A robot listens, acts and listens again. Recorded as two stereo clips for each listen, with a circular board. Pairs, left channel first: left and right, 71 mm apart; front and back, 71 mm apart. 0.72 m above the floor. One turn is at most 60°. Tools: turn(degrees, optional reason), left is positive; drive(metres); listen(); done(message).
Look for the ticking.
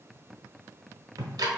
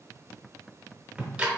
turn(degrees=-60, reason="The ticking: 105° right.")
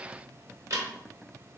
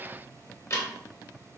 turn(degrees=-45, reason="The ticking is now 45° right.")
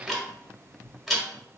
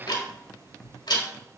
done("Facing the ticking, under 1 m away.")